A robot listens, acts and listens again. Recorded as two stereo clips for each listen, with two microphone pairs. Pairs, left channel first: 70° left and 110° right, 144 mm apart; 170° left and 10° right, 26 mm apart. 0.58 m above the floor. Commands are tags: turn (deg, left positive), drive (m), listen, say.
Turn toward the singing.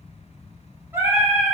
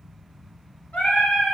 <turn deg="180"/>
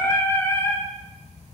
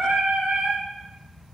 <say>Facing the singing.</say>